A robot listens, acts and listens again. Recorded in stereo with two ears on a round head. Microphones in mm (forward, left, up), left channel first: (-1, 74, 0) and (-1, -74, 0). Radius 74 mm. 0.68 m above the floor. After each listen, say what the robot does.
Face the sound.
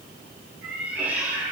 Turn 30° right.
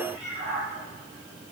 Turn 135° right.
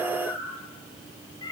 Turn 25° left.
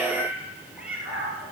Found it: a cat meowing, straight ahead.